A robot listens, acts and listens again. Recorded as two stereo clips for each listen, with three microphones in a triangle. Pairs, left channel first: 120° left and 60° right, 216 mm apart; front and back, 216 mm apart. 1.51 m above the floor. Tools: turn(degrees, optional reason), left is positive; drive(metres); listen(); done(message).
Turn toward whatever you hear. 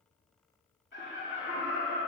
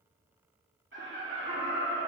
turn(degrees=140, reason="The laughter: 140° left.")
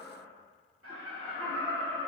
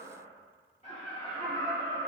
turn(degrees=-65, reason="The laughter is now 65° right.")
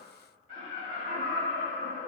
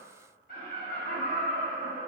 turn(degrees=-35, reason="The laughter is now 35° right.")
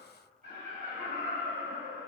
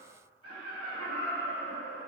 turn(degrees=-10, reason="The laughter is now 10° right.")
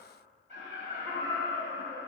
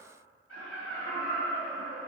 done("Facing the laughter, 2 to 4 m away.")